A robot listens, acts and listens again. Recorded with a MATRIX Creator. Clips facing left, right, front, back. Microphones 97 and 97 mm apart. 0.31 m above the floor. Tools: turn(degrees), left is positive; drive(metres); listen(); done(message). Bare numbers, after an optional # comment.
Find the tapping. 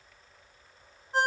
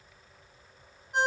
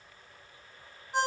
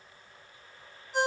listen()
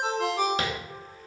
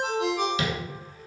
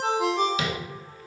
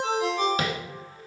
# The tapping: 135° left.
turn(135)
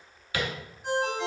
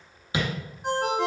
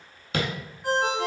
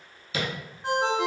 # The tapping is now 20° right.
turn(-20)
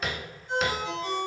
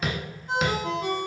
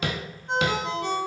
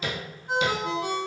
done("Facing the tapping, under 1 m away.")